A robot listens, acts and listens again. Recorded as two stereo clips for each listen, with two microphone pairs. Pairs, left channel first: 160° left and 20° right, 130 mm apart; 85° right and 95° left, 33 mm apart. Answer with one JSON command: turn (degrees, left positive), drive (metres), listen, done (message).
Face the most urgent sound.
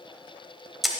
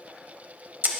{"listen": true}
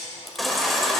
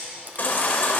{"turn": -110}
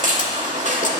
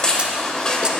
{"turn": -25}
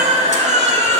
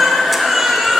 {"done": "Found it: a baby crying, straight ahead, 1 to 2 m away."}